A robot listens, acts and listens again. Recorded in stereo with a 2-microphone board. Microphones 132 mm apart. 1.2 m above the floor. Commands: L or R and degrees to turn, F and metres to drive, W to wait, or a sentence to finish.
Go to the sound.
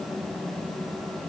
W
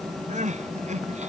R60
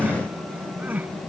R15
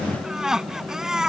F1.0
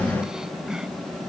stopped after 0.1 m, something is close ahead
Something is in my way. I am facing the crying but have not reached it.